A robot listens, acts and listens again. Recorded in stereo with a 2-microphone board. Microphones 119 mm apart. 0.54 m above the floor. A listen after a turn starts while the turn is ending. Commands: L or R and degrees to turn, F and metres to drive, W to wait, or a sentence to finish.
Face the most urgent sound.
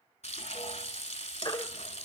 L45
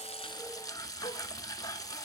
W
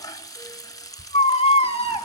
L75
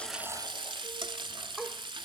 W
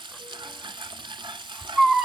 Found it: a baby crying, straight ahead.